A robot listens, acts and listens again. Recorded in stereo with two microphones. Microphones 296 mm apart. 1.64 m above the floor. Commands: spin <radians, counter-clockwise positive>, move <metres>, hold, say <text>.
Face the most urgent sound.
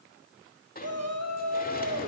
spin -1.05
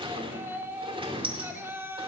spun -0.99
spin -0.17
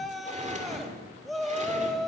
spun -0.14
say Found it: a shout, straight ahead.